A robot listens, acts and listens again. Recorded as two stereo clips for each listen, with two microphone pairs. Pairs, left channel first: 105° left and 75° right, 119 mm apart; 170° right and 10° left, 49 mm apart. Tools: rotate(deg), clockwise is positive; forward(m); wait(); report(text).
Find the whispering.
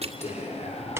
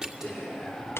rotate(-95)
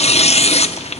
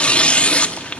wait()
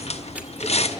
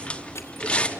report("Found it: whispering, straight ahead, over 4 m away.")